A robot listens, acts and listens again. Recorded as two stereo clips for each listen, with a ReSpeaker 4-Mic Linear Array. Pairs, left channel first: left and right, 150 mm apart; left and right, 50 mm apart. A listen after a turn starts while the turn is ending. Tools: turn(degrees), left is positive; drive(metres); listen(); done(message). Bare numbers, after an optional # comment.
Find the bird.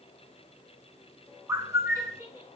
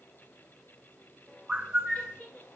# The bird: about 20° right or 160° right.
turn(-20)
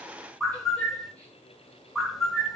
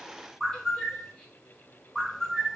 done("Facing the bird, under 1 m away.")